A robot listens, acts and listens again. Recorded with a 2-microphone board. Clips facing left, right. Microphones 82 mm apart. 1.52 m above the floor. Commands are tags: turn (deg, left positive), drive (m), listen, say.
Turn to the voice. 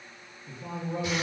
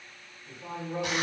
<turn deg="30"/>
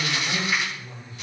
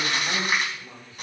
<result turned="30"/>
<turn deg="-25"/>
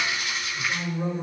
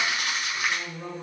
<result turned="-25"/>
<turn deg="10"/>
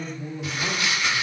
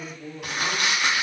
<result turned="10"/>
<say>Found it: a man speaking, straight ahead.</say>